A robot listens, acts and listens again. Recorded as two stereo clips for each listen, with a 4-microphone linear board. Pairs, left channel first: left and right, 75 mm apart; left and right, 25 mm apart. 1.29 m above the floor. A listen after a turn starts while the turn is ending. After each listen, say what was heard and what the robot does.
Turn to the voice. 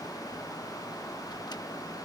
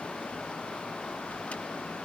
Keep listening.
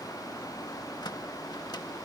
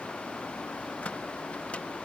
Keep listening.
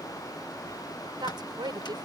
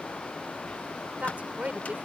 Turn 90° right.
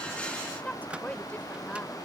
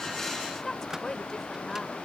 So it is at 20° left. Turn 20° left.
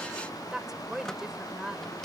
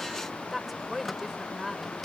Found it: a woman speaking, straight ahead.